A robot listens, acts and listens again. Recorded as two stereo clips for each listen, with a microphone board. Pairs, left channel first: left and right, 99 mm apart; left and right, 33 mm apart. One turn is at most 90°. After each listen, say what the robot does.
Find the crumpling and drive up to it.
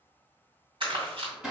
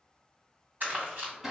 Turn 60° right.
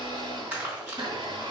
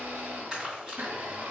Turn 20° right.
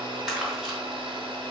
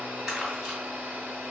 Drive 1.0 m forward.
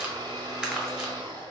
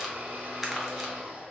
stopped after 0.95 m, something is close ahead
Turn 10° right.
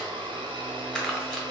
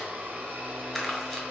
Arrived at the crumpling, straight ahead.